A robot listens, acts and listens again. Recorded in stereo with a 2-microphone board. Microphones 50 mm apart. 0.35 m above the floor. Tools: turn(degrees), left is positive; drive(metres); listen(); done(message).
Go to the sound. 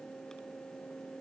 listen()
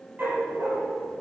turn(degrees=-40)
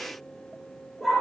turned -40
drive(metres=1.0)
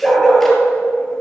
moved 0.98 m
drive(metres=1.0)
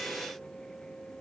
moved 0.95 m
listen()
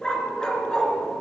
turn(degrees=15)
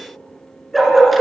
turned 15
drive(metres=1.0)
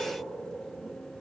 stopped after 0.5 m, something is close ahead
listen()
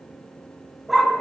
done("I am next to the dog barking.")